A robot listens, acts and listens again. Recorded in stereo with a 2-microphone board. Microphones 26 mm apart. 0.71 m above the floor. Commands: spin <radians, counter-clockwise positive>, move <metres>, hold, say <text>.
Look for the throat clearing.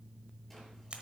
hold
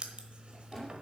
hold
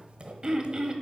spin -0.44
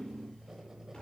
hold
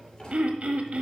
spin -2.27
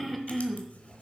say Facing the throat clearing.